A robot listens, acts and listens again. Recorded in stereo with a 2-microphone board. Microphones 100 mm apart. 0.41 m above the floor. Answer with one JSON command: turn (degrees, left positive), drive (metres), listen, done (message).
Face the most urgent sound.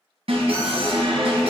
{"turn": -70}
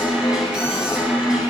{"turn": -10}
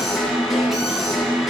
{"done": "Found it: an alarm, straight ahead."}